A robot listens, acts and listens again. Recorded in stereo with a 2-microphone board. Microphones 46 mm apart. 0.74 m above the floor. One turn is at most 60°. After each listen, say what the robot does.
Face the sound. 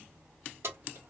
Turn 60° right.
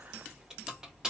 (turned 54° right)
Turn 15° right.
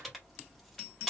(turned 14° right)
Facing the keys jangling, 1 to 2 m away.